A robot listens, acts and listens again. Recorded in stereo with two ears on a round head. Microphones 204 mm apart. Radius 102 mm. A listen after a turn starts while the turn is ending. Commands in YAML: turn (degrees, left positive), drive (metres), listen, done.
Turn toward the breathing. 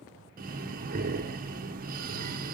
turn: -40
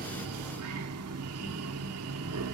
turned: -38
turn: -105
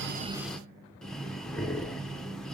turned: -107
done: "Found it: breathing, straight ahead."